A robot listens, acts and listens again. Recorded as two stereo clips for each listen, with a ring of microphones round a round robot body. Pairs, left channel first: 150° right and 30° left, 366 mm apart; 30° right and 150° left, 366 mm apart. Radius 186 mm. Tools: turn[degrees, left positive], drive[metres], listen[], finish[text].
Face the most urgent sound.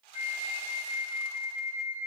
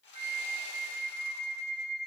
Action: listen[]
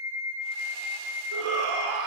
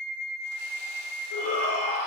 Action: finish[Found it: a shout, straight ahead, 1 to 2 m away.]